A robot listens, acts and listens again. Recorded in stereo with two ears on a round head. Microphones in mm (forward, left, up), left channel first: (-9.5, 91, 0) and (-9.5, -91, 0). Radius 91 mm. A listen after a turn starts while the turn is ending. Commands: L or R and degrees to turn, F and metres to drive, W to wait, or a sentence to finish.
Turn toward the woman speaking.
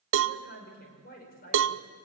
L45
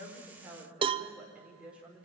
Found it: a woman speaking, straight ahead, over 4 m away.